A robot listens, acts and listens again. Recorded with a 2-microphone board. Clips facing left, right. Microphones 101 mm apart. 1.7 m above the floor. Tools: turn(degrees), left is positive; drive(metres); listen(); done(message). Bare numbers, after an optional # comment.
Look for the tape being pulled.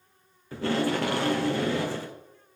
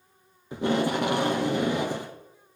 # The tape being pulled: about 20° right or 160° right.
turn(-20)
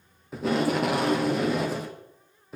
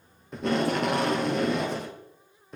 done("Found it: tape being pulled, straight ahead, 1 to 2 m away.")